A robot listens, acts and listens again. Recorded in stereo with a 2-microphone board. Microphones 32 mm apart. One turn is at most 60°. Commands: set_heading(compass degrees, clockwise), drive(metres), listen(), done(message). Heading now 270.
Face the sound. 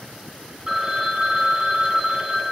set_heading(290)
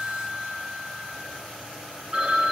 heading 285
set_heading(345)
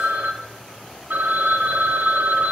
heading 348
set_heading(48)
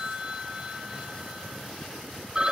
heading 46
set_heading(71)
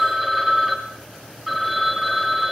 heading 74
done("Found it: a phone ringing, straight ahead, 2 to 4 m away.")